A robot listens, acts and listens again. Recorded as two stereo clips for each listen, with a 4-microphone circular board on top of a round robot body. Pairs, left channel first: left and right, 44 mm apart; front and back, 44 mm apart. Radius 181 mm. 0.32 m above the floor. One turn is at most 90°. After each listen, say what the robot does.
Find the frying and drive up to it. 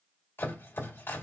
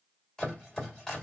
Keep listening.
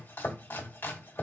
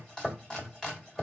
Keep listening.
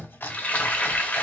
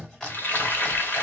Turn 40° left.
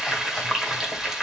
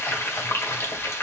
Turn 10° right.
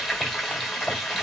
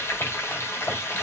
Drive 1.0 m forward.
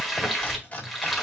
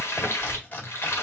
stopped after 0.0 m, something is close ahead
Blocked. The frying is further on, straight ahead.